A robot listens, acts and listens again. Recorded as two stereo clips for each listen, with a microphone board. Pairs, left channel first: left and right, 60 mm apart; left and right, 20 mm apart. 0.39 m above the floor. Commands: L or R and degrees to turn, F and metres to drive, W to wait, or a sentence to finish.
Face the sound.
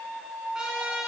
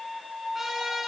R30
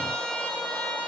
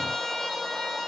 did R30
L15
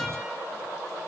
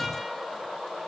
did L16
W
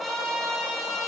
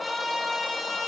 Facing the trumpet, 1 to 2 m away.